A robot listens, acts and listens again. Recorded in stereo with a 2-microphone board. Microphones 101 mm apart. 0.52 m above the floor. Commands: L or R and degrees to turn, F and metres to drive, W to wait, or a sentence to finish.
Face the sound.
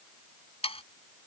L90
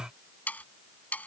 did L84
L15
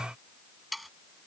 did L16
Found it: sawing, straight ahead.